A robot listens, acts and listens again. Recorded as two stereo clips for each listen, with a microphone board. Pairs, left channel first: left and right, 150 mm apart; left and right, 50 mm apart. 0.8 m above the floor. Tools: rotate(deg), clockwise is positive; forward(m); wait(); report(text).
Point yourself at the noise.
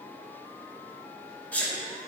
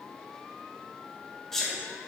rotate(-30)
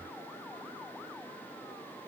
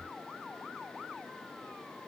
wait()
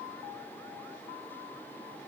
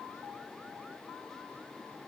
report("I heard a sneeze, but can't make it out now. It was about 20° right or 140° left.")